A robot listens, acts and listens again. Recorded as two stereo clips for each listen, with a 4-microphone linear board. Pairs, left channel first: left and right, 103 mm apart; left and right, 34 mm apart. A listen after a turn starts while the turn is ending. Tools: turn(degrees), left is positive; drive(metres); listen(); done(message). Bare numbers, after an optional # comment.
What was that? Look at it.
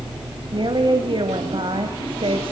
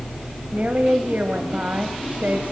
# The woman speaking: about 60° right or 120° right.
turn(-60)
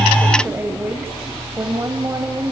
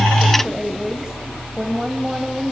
# So it is at 35° right.
turn(-35)
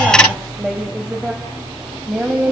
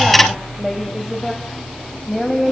# The woman speaking is now 15° right.
turn(-15)
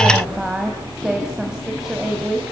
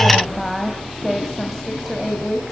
done("Found it: a woman speaking, straight ahead, 2 to 4 m away.")